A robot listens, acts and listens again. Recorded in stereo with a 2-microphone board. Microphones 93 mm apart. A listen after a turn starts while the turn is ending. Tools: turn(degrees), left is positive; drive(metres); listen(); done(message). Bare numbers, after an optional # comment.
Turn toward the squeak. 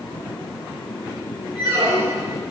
turn(-90)
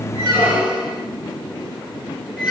done("Facing the squeak, 1 to 2 m away.")